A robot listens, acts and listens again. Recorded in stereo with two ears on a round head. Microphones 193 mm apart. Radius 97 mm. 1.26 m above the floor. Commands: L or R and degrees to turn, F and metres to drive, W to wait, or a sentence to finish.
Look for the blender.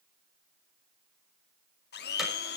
L50
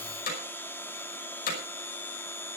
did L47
L10
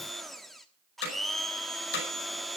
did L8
Found it: a blender, straight ahead.